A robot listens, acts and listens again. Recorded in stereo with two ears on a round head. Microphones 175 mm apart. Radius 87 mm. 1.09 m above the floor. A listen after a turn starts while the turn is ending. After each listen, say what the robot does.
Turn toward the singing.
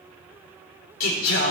Turn 75° left.
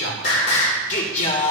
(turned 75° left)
Turn 40° left.
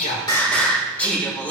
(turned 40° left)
Turn 10° left.
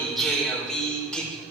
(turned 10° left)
Facing the singing.